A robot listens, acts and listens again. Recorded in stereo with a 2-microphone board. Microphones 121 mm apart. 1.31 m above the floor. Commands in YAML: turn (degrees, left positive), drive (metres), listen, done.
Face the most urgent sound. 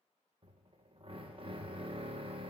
listen: true
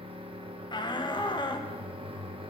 turn: 35
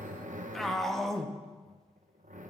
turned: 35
done: "Found it: a shout, straight ahead."